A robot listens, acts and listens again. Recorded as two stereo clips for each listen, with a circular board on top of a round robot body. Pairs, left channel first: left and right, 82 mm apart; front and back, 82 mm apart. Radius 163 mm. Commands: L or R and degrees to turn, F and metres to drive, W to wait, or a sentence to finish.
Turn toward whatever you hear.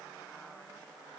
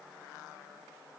W
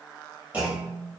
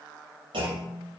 R165
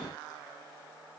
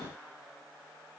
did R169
Facing where the clunk came from. I can't hear it now.